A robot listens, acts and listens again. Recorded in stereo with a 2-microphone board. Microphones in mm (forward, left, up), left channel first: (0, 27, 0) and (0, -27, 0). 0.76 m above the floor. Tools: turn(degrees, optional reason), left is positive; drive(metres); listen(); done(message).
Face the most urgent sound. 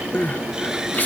turn(degrees=35, reason="The crying: about 35° left or 145° left.")
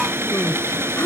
listen()
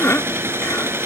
turn(degrees=105, reason="So it is at 105° left.")
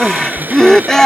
turn(degrees=10, reason="The crying is now 10° left.")
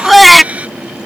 done("Facing the crying.")